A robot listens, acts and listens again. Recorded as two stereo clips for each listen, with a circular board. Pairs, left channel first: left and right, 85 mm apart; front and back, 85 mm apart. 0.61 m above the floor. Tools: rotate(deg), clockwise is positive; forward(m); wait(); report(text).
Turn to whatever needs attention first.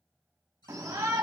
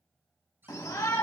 rotate(40)
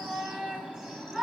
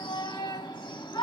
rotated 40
report("Found it: a shout, straight ahead, 1 to 2 m away.")